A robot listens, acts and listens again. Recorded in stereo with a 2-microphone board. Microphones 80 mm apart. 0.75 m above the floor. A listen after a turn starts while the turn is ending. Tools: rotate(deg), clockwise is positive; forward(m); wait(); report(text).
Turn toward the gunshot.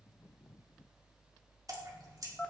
wait()
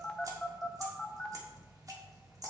wait()
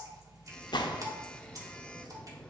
rotate(-65)
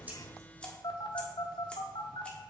wait()
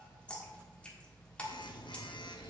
report("I heard a gunshot, but can't make it out now. It was about straight ahead or 50° left.")